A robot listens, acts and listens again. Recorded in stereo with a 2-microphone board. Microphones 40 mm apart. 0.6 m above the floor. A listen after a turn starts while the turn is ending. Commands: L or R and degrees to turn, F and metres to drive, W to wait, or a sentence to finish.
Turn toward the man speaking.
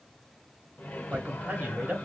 R40
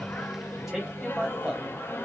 Facing the man speaking, 1 to 2 m away.